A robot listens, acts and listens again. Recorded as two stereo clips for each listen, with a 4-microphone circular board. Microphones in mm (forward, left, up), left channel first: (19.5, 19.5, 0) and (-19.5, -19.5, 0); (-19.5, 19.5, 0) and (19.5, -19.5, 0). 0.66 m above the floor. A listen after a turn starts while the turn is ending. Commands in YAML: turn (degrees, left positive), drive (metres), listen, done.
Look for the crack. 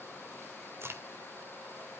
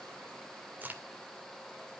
turn: -105
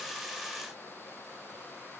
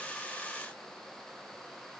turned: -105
done: "Facing where the crack came from. I can't hear it now."